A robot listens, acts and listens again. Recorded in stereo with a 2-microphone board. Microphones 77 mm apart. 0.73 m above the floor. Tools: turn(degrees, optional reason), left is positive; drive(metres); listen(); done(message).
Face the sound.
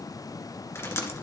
turn(degrees=35, reason="The dripping: about 35° left or 145° left.")
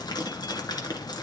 turn(degrees=110, reason="So it is at 110° left.")
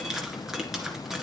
done("Found it: dripping, straight ahead, 1 to 2 m away.")